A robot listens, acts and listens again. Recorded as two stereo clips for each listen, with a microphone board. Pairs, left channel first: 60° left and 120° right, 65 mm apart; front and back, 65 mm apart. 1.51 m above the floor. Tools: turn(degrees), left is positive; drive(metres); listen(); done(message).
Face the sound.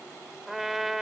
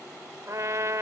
turn(degrees=155)
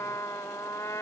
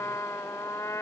turn(degrees=35)
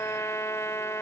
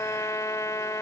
turn(degrees=25)
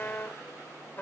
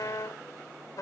done("Facing the trumpet.")